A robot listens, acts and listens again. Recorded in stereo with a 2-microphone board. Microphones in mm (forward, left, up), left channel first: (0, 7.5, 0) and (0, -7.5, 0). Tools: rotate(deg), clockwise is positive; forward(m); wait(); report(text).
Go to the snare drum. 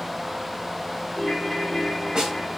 rotate(50)
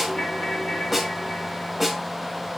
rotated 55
forward(1.0)
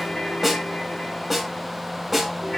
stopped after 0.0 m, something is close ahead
report("Something is in my way. I am facing the snare drum but have not reached it.")